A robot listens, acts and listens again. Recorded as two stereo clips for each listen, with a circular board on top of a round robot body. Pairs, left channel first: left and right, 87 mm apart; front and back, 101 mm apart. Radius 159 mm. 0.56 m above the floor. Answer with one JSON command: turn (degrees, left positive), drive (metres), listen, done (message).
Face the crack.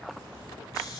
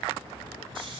{"listen": true}
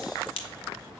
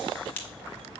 {"turn": 75}
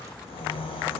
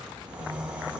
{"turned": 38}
{"turn": 40}
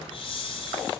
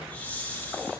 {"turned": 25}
{"turn": 15}
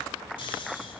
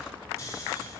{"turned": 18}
{"done": "I heard a crack from this way, but can't make it out now."}